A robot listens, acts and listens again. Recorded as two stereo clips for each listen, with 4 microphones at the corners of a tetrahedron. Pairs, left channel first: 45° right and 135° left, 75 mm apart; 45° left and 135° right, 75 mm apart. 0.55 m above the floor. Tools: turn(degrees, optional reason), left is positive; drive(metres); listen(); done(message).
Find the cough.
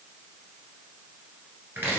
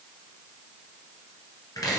listen()
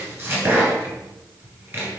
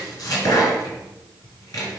listen()
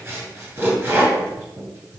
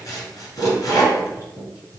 done("I can't make out a cough to turn to.")